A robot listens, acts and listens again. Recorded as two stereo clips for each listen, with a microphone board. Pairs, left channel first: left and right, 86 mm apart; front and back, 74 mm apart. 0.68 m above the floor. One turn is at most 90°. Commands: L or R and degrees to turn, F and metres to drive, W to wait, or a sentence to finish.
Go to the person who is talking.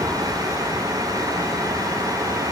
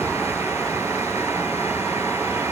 W
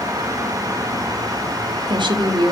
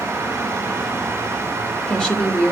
R75
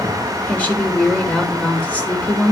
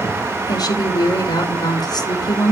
L20
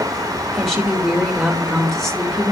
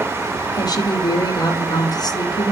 F1.0
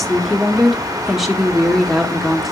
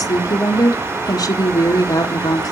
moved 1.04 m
F1.0
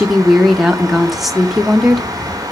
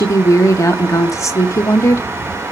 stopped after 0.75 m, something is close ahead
I am next to the woman speaking.